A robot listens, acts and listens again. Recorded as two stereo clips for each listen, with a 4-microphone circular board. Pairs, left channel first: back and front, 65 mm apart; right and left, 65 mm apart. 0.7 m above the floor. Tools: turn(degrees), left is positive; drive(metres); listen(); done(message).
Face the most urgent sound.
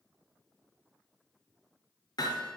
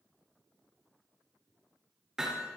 listen()
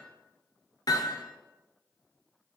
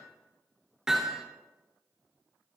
listen()
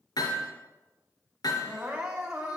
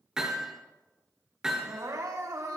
turn(degrees=75)
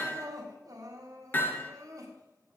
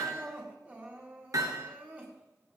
turn(degrees=25)
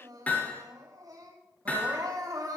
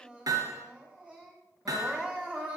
turn(degrees=20)
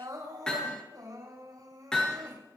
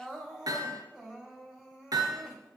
done("Facing the crying, over 4 m away.")